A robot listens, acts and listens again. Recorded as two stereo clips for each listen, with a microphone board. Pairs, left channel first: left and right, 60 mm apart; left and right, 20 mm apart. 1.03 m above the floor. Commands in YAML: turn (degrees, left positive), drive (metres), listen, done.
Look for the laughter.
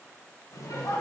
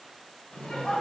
turn: 90
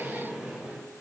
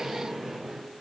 turn: -15
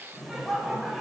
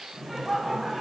done: "Facing the laughter."